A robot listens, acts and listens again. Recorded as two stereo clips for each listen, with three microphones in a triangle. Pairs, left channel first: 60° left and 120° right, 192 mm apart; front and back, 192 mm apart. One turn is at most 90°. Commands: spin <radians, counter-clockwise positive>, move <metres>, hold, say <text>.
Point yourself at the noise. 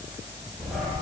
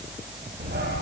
spin 1.57
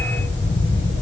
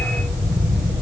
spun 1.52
spin 1.13
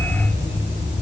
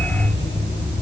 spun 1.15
say Found it: a dog barking, straight ahead, over 4 m away.